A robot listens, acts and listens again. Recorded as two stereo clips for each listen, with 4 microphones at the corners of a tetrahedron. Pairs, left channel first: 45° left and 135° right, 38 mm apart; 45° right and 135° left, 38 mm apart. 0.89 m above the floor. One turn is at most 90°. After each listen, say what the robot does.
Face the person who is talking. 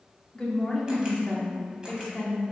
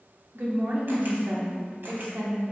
Turn 90° left.
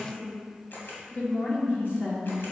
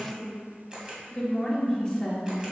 Turn 25° left.
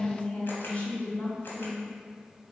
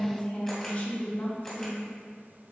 Facing the woman speaking, 1 to 2 m away.